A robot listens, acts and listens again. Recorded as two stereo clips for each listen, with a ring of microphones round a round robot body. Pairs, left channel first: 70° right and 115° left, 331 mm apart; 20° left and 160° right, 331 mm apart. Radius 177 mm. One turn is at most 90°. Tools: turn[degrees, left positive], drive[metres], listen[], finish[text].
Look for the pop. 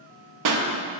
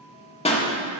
Thought: The pop: 95° left.
Action: turn[90]
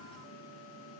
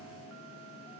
Action: finish[Facing where the pop came from. I can't hear it now.]